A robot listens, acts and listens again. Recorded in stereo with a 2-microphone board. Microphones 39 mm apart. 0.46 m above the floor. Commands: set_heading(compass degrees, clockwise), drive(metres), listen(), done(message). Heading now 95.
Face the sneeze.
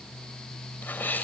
set_heading(40)
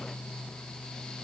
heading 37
listen()
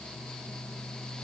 done("I heard a sneeze, but can't make it out now. It was about 5° right or 65° left.")